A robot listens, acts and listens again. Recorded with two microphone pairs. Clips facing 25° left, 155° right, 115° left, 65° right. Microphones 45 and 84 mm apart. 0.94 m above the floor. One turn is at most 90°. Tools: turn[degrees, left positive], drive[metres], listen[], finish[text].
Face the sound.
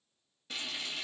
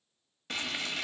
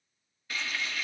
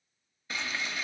Thought: The frying: 135° right.
Action: turn[-90]
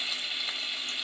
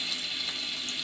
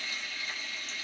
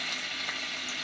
Thought: The frying is now 50° right.
Action: turn[-50]
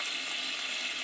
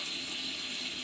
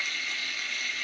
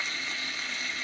Action: finish[Facing the frying.]